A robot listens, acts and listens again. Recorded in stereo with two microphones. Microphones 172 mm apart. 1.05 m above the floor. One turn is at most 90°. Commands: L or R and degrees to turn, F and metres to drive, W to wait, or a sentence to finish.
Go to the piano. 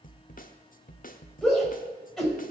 W
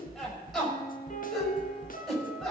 L50
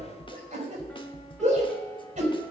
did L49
F1.0
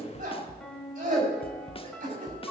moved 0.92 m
F1.0
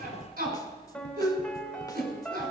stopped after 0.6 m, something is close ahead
Arrived at the piano, straight ahead.